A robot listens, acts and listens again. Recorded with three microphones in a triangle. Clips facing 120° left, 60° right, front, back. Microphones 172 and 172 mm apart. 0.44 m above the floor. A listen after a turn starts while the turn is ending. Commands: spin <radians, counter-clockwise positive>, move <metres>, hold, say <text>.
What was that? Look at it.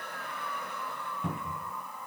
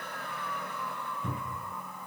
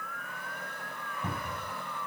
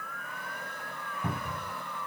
spin 1.83
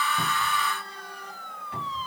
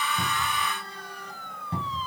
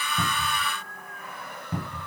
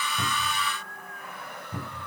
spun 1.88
say Facing the cupboard door, over 4 m away.